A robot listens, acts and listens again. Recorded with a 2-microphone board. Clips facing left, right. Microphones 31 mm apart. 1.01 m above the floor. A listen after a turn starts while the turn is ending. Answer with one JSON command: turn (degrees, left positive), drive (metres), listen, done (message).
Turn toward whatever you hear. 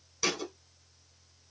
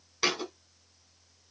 {"turn": -30}
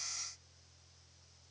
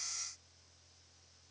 {"listen": true}
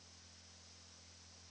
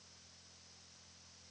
{"done": "I heard a thud, but can't make it out now. It was about straight ahead or 120° right."}